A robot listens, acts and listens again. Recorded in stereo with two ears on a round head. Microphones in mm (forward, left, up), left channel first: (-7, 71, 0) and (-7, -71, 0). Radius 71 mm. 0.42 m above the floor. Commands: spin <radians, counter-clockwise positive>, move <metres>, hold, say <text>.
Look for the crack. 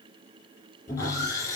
hold
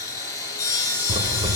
spin -0.61
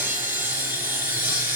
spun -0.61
hold
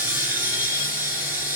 say I heard a crack, but can't make it out now. It was about straight ahead or 110° right.